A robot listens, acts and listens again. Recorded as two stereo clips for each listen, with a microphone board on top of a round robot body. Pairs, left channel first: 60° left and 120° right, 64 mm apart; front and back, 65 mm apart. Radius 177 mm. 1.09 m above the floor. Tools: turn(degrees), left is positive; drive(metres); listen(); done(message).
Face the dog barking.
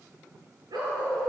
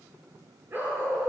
turn(degrees=-125)
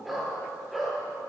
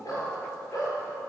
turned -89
turn(degrees=-35)
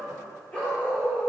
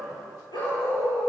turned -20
turn(degrees=-15)
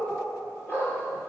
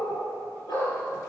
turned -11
done("Facing the dog barking, over 4 m away.")